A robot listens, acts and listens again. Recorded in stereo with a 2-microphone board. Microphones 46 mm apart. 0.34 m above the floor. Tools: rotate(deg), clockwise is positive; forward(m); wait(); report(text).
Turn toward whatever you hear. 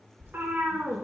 rotate(55)
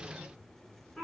rotate(-20)
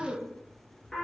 rotate(-10)
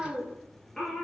rotate(-15)
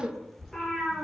rotate(-10)
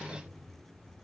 wait()
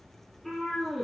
report("Facing the cat meowing, 2 to 4 m away.")